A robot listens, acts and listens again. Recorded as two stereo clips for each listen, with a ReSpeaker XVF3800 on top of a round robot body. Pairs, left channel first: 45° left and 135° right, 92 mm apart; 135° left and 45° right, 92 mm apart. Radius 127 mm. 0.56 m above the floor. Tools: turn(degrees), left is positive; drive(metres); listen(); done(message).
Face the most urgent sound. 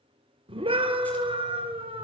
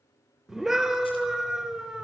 turn(degrees=-130)
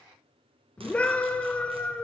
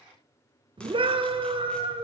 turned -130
turn(degrees=-30)
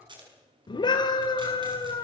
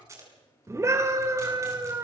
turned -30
turn(degrees=10)
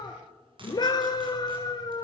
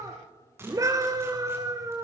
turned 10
done("Facing the scream, 2 to 4 m away.")